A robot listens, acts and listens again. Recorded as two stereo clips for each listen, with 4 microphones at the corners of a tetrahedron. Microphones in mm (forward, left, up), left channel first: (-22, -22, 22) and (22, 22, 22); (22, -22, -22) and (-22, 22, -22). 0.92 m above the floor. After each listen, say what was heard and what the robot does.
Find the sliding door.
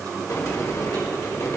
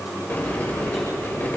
The sliding door: 105° right. Turn 105° right.
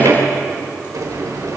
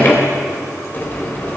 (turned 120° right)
The sliding door is now 15° left. Turn 15° left.
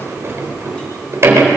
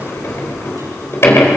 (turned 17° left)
Found it: a sliding door, straight ahead, over 4 m away.